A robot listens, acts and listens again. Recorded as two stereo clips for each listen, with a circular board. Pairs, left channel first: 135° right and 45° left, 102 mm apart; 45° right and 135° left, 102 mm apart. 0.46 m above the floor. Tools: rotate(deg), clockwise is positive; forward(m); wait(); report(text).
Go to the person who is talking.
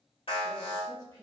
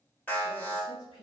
rotate(70)
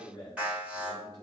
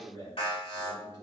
rotate(-10)
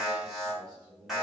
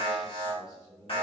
forward(1.0)
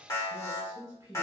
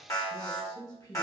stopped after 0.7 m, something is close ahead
report("Arrived at the man speaking, straight ahead.")